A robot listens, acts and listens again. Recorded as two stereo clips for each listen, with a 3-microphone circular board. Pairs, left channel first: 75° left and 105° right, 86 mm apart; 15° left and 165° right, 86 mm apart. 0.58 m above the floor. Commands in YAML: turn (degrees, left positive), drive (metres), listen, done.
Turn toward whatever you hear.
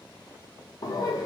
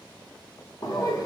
turn: 45
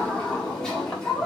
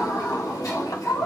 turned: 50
done: "Found it: laughter, straight ahead."